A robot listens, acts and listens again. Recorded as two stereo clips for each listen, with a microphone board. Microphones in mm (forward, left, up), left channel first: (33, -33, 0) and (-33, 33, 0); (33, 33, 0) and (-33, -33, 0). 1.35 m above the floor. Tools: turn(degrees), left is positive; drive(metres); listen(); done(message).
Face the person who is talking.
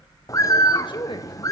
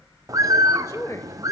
turn(degrees=-15)
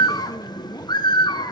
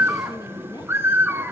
listen()
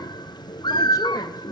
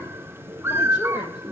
listen()
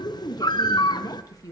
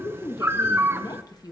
done("Facing the woman speaking, 1 to 2 m away.")